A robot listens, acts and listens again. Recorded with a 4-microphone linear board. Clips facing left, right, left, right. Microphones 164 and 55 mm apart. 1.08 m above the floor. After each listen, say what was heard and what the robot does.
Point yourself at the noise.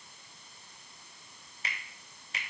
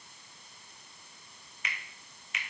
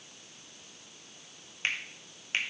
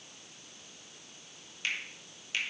The finger snap: about 35° left or 145° left. Turn 35° left.
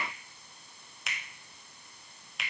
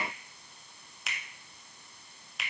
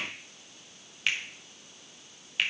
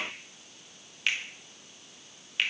Facing the finger snap.